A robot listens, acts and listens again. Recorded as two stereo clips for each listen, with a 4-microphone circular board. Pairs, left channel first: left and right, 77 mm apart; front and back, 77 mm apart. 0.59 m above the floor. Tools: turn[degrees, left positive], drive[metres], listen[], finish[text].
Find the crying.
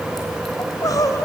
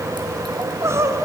Thought: The crying: 130° left.
Action: turn[130]
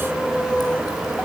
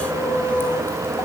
Action: listen[]
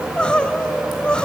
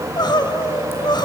Thought: The crying is now 15° left.
Action: turn[15]
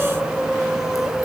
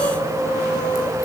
Action: listen[]
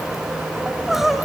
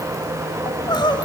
Action: finish[Facing the crying, 1 to 2 m away.]